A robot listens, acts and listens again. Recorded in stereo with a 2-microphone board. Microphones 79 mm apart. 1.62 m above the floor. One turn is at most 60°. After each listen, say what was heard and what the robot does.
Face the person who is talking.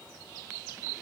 Keep listening.
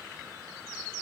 Keep listening.
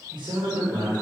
The man speaking: about 70° right or 110° right. Turn 60° right.
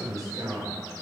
So it is at 50° right. Turn 50° right.
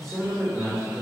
Found it: a man speaking, straight ahead, 2 to 4 m away.